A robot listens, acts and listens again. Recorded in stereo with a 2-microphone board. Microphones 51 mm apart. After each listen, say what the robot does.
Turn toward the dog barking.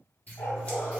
Turn 90° left.
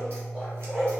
Turn 20° right.
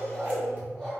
Found it: a dog barking, straight ahead, 2 to 4 m away.